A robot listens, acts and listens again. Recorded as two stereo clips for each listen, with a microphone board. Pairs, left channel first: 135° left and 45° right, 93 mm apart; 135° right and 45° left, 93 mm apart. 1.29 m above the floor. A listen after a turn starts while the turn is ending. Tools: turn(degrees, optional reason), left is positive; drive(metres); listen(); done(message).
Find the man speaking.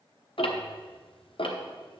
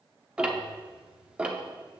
listen()
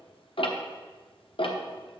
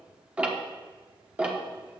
listen()
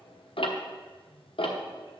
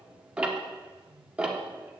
done("I can't make out a man speaking to turn to.")